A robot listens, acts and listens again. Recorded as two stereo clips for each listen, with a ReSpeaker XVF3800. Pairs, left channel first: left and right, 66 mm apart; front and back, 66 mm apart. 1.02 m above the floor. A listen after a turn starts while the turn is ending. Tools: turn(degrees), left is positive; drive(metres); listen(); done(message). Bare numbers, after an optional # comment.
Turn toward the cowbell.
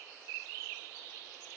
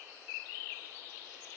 listen()
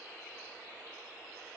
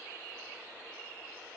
listen()
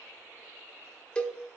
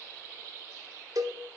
# The cowbell: 165° left.
turn(165)
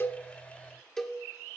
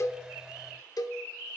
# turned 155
# The cowbell is now 10° left.
turn(10)
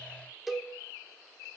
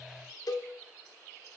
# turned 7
done("Facing the cowbell.")